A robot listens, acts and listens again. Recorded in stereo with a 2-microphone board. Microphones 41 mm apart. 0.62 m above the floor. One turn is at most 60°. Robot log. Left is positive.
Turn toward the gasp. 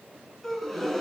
cmd yaw +30
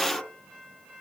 note: So it is at 150° left.
cmd yaw +60
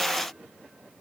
note: Nothing new. It was at 90° left.
cmd yaw +60
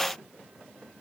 note: Nothing new. It was at 30° left.
cmd yaw +30
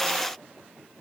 end: I heard a gasp from this way, but can't make it out now.